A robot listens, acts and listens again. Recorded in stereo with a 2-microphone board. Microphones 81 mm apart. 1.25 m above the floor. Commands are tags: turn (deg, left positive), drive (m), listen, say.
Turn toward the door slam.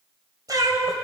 <listen/>
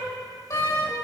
<turn deg="35"/>
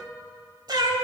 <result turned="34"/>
<listen/>
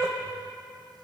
<say>I heard a door slam, but can't make it out now. It was about straight ahead or 110° left.</say>